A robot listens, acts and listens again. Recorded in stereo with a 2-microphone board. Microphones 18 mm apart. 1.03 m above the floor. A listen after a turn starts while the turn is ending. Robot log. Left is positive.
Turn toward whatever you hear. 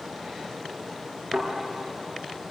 note: The thud: about 70° right or 110° right.
cmd yaw -70
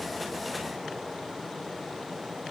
cmd idle
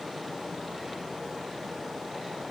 end: I heard a thud, but can't make it out now. It was about straight ahead or 40° right.